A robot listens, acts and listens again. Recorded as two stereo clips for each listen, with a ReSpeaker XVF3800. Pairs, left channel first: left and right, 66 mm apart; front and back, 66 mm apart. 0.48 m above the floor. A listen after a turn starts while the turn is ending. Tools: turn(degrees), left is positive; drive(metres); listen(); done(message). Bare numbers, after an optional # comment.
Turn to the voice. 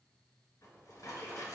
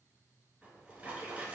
listen()
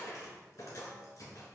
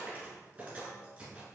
listen()
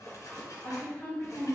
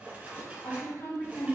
# The woman speaking: 40° left.
turn(40)
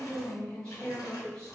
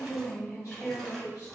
# The woman speaking is now 15° left.
turn(15)
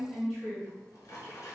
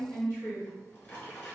done("Facing the woman speaking.")